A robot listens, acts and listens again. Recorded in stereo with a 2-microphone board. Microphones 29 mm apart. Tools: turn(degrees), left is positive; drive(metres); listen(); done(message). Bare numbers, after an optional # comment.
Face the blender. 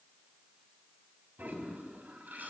listen()
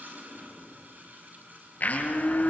# The blender: about 65° left or 115° left.
turn(65)
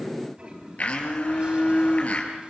# So it is at 50° left.
turn(50)
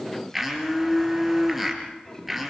done("Found it: a blender, straight ahead, over 4 m away.")